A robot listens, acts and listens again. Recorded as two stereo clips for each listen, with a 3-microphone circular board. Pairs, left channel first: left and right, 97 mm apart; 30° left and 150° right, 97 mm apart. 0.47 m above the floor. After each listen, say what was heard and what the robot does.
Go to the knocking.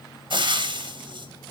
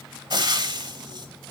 Keep listening.
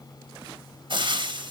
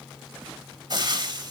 Keep listening.
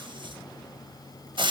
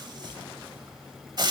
I can't make out knocking to turn to.